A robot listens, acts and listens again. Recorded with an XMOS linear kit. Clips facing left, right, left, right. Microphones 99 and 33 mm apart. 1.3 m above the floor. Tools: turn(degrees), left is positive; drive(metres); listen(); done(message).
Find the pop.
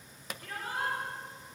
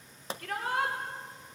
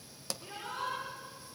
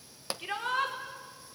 turn(degrees=-30)
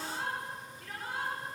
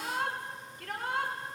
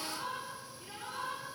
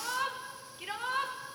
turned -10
listen()
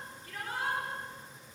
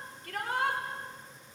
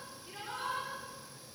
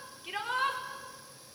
done("I heard a pop, but can't make it out now. It was about 20° right or 140° right.")